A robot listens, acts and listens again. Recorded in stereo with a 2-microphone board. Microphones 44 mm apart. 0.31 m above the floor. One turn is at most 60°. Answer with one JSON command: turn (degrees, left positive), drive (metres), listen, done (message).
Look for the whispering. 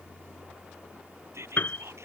{"turn": -60}
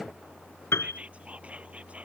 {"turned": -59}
{"turn": -30}
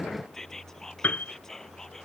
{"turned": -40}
{"turn": 10}
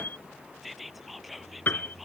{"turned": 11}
{"done": "Facing the whispering."}